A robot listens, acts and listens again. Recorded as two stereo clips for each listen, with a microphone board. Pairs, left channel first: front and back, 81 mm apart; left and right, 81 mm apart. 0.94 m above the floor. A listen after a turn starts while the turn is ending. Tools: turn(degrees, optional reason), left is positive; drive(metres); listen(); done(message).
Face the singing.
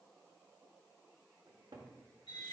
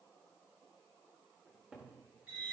listen()
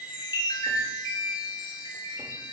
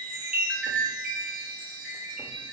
listen()
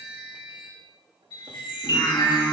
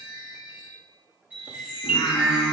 turn(degrees=50, reason="The singing: 50° left.")
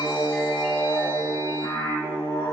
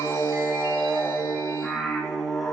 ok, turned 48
done("Found it: singing, straight ahead.")